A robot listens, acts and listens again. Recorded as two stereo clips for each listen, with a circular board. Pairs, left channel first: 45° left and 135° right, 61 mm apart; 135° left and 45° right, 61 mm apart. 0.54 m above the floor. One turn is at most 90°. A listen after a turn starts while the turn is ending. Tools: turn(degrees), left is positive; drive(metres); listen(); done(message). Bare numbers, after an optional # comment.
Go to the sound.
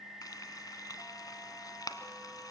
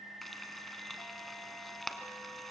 # The frying: 45° left.
turn(45)
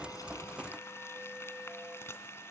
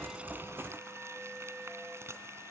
drive(1.0)
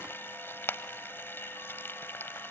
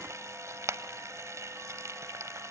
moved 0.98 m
drive(1.0)
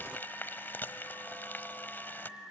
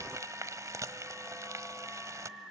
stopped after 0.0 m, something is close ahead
# The frying is now 10° right.
turn(-10)
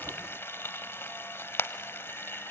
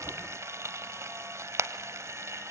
done("I am next to the frying.")